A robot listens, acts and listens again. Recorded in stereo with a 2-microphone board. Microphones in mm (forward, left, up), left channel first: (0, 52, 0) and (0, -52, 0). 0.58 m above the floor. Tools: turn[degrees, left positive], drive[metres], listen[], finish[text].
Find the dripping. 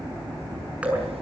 Action: turn[-30]
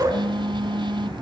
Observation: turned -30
Thought: So it is at 135° right.
Action: turn[-135]
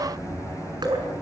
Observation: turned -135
Thought: The dripping is now 45° right.
Action: turn[-45]
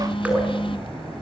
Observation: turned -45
Thought: The dripping is now 15° right.
Action: turn[-15]
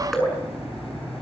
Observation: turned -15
Action: finish[Facing the dripping, over 4 m away.]